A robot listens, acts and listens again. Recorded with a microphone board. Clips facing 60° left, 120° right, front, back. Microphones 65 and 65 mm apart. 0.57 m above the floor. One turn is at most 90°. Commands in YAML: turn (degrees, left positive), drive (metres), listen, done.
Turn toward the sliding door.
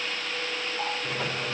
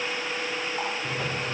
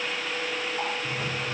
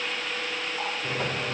turn: 90
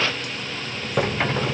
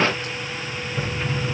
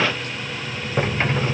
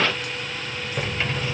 turn: 55
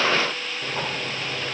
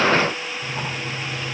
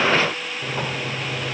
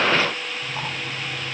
done: "Found it: a sliding door, straight ahead, 1 to 2 m away."